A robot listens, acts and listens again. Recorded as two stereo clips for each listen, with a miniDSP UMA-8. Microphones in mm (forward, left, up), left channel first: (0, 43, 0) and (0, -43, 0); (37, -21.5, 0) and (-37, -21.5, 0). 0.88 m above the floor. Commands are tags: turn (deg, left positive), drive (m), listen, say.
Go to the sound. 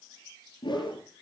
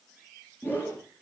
<turn deg="65"/>
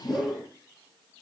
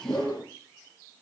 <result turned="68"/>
<drive m="1.0"/>
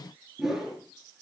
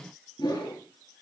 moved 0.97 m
<drive m="1.0"/>
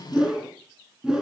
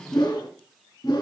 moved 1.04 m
<turn deg="-10"/>
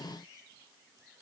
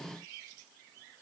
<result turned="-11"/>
<listen/>
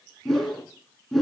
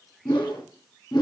<drive m="1.0"/>
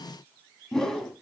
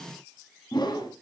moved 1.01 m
<drive m="1.0"/>
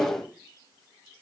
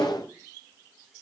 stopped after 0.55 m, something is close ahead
<say>I am next to the whoosh.</say>